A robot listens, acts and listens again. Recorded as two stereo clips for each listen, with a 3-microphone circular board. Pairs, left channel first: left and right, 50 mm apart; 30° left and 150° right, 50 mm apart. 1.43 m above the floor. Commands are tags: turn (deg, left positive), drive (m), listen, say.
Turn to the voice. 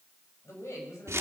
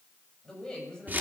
<turn deg="100"/>
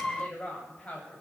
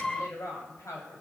<turn deg="30"/>
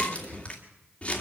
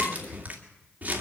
<listen/>
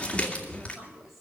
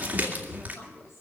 <say>Found it: a woman speaking, straight ahead, over 4 m away.</say>